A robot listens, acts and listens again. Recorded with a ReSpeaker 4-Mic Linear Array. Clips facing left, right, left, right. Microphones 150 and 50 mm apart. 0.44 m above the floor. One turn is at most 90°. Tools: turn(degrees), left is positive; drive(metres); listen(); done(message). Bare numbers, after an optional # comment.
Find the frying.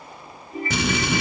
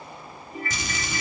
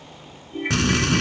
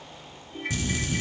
turn(90)
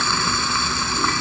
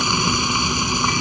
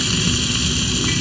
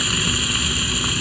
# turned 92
# So it is at 15° right.
turn(-15)
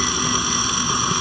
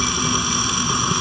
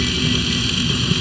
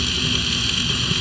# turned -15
done("Facing the frying.")